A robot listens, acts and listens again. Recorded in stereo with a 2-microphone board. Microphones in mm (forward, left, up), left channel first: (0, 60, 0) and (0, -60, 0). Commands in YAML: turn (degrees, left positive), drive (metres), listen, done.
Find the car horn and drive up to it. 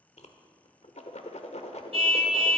turn: -55
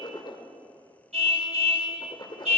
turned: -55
turn: -70
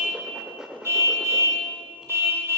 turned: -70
turn: -25
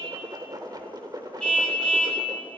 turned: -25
turn: 10
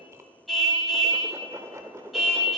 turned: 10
drive: 1.0
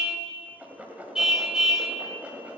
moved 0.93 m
drive: 1.0
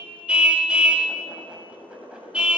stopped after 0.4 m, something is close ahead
turn: -10
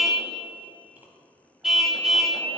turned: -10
done: "I am next to the car horn."